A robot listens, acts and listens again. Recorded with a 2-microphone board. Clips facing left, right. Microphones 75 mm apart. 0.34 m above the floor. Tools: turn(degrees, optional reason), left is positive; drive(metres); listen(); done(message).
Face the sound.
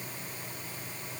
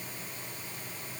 listen()
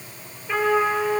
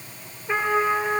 turn(degrees=-25, reason="The trumpet: about 25° right or 155° right.")
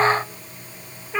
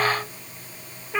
done("Facing the trumpet, over 4 m away.")